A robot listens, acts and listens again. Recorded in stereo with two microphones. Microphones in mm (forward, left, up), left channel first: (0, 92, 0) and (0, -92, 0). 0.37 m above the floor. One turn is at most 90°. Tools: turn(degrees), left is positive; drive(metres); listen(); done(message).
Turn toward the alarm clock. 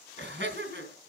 listen()
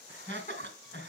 listen()
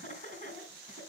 done("I can't make out an alarm clock, only laughter.")